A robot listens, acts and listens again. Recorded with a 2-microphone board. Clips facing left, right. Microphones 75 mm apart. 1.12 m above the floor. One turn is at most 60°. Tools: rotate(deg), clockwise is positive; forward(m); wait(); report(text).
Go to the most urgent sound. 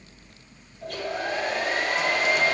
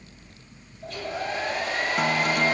wait()
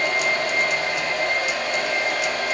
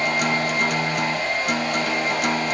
wait()
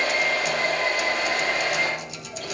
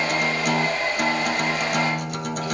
report("I can't make out anything urgent to turn to.")